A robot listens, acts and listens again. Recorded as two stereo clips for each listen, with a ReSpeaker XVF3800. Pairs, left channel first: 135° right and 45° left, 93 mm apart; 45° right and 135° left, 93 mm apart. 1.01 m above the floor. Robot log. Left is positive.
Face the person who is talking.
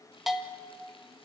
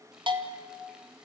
cmd idle
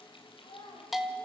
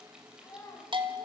note: The child speaking: 100° right.
cmd yaw -100
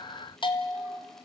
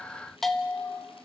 cmd idle
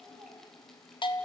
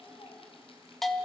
cmd idle
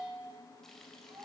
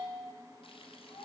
end: Found it: a child speaking, straight ahead, over 4 m away.